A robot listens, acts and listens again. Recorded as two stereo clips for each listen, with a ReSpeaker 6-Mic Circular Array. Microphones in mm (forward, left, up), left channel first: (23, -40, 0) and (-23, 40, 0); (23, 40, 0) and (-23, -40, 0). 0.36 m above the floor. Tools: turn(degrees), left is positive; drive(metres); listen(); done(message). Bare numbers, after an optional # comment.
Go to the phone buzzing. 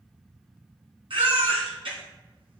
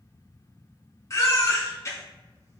listen()
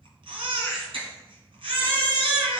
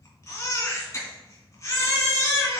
listen()
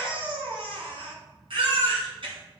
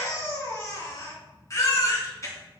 done("I can't make out a phone buzzing, only a baby crying.")